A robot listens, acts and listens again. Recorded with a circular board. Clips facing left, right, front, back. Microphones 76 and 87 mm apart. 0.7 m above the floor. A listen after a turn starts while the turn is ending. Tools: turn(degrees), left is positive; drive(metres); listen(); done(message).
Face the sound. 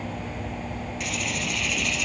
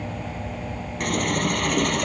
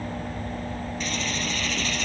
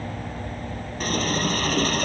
turn(degrees=-130)
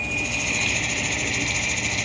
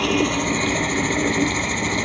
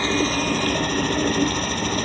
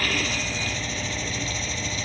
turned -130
turn(degrees=-35)
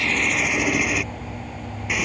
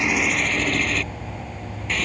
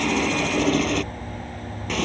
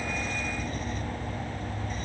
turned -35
turn(degrees=15)
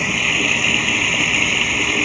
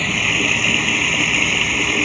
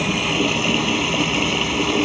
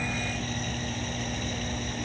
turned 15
done("Facing the running tap.")